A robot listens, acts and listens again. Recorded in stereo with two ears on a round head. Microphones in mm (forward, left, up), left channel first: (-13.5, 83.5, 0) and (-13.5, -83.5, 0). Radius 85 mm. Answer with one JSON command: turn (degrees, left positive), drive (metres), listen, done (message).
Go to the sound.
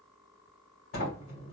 {"turn": 70}
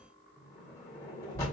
{"turn": 15}
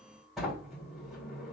{"drive": 1.0}
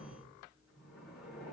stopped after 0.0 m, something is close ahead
{"done": "Blocked. The sliding door is further on, straight ahead."}